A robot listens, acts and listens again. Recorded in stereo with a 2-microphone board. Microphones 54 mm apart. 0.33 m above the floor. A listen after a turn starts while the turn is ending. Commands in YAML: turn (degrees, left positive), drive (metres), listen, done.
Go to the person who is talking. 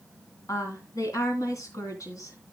turn: 70
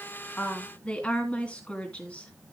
turn: 20
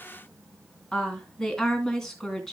turn: 10
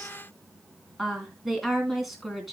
drive: 1.0
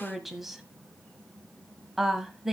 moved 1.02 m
drive: 1.0
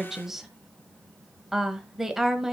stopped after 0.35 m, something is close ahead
done: "Arrived at the woman speaking, straight ahead."